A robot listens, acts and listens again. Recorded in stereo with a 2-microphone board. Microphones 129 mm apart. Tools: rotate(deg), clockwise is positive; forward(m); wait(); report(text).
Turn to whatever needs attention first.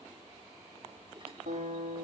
wait()
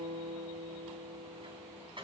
wait()
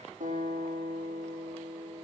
report("I can't make out anything urgent to turn to.")